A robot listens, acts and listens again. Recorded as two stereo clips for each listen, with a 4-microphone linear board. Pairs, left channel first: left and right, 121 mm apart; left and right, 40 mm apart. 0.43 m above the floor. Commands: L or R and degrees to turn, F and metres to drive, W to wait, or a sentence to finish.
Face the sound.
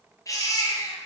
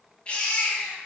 L30
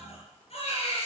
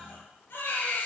L120
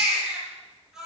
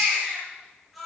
Facing the baby crying.